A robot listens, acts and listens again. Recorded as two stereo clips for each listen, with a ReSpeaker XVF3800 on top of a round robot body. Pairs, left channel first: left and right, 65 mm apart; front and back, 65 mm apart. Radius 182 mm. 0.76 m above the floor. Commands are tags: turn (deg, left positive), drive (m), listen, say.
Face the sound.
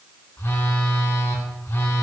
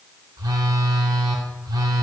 <turn deg="150"/>
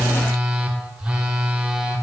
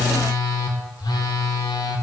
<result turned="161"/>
<turn deg="-15"/>
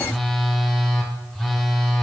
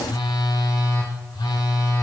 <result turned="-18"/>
<say>Facing the phone buzzing, under 1 m away.</say>